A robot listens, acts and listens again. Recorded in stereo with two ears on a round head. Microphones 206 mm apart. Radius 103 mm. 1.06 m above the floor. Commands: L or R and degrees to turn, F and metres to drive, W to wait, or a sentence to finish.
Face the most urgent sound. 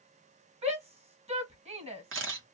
R30
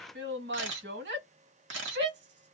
R115
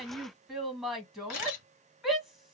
Found it: a shout, straight ahead, 1 to 2 m away.